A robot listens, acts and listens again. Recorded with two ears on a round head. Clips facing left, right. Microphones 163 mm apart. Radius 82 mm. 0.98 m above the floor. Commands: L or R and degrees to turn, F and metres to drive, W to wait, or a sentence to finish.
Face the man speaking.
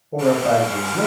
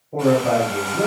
L55
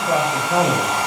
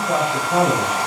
L65
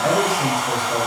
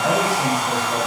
W
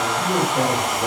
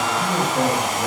W
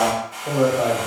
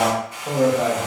Found it: a man speaking, straight ahead, 1 to 2 m away.